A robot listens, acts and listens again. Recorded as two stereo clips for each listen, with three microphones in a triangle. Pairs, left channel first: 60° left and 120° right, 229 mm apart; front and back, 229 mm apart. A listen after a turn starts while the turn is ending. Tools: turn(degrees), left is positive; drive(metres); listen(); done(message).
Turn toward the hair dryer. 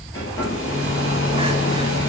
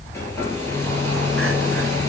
turn(degrees=80)
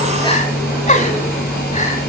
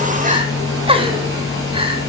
turn(degrees=15)
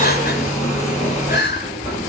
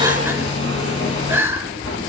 done("Found it: a hair dryer, straight ahead, 2 to 4 m away.")